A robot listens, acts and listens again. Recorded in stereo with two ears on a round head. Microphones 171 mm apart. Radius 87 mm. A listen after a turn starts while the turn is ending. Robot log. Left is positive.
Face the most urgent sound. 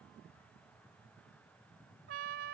cmd idle
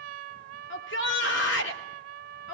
note: The shout: about 70° left or 110° left.
cmd yaw +70
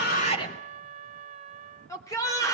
note: So it is at 20° left.
cmd yaw +20
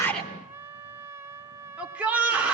end: Facing the shout, 2 to 4 m away.